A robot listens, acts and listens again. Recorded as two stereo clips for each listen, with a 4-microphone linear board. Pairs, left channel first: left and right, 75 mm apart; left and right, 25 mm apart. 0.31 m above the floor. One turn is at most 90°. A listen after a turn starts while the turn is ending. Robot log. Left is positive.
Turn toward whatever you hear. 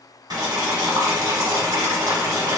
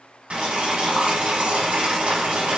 note: The boiling: about 65° right or 115° right.
cmd yaw -65
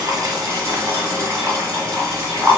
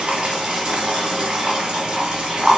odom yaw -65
note: So it is at 40° right.
cmd yaw -40
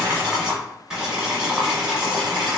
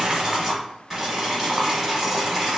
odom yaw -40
note: The boiling is now 10° right.
cmd yaw -10
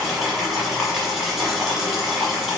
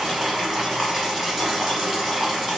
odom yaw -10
end: Facing the boiling, 1 to 2 m away.